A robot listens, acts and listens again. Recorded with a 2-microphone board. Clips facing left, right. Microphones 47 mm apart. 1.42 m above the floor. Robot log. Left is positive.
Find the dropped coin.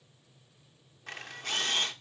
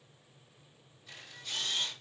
cmd idle
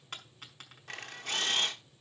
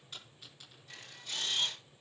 note: The dropped coin: about 60° left or 120° left.
cmd yaw +60
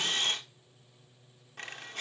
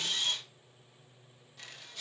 cmd idle
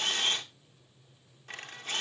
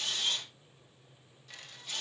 end: I heard a dropped coin, but can't make it out now. It was about straight ahead or 60° left.